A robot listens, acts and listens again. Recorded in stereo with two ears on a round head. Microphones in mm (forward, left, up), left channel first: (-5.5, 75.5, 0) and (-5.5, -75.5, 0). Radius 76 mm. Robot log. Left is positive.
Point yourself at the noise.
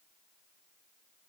cmd idle
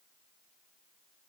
cmd idle
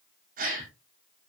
note: The gasp: about 50° right or 130° right.
cmd yaw -50
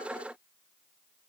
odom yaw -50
cmd idle
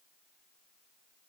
end: I heard a gasp, but can't make it out now. It was about straight ahead or 80° right.